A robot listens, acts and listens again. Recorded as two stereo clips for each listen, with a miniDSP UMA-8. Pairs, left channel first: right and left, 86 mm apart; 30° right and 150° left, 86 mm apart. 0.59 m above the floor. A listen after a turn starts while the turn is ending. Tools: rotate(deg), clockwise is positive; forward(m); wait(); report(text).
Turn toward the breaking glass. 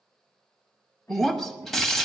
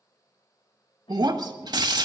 rotate(175)
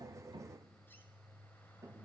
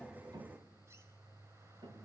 report("I heard breaking glass from this way, but can't make it out now.")